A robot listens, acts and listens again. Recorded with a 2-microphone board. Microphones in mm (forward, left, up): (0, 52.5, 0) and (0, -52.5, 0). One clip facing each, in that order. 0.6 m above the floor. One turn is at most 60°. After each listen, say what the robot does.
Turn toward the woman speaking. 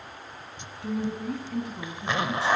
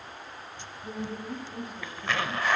Turn 60° left.
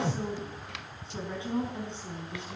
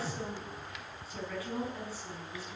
Turn 25° left.
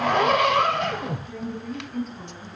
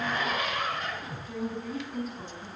Facing the woman speaking, over 4 m away.